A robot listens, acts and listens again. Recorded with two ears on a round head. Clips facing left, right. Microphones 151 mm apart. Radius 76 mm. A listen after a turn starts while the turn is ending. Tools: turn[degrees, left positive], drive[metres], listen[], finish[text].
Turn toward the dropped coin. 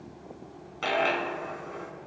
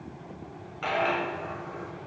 Thought: The dropped coin: about 45° left or 135° left.
Action: turn[45]
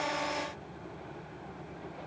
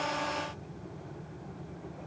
Action: listen[]
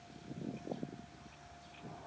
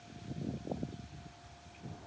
Action: finish[I heard a dropped coin, but can't make it out now. It was about straight ahead or 90° left.]